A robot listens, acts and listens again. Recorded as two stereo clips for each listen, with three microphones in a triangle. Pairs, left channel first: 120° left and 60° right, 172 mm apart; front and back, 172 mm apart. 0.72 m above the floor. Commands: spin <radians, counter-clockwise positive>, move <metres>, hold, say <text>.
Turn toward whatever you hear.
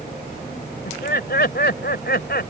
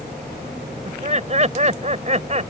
spin 2.36
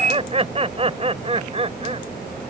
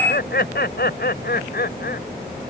say Found it: laughter, straight ahead.